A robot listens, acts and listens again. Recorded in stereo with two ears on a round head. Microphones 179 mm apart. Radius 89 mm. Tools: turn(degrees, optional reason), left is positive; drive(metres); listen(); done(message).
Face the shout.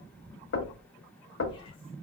listen()
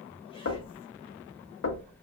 listen()
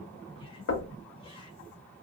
done("I can't make out a shout, only knocking.")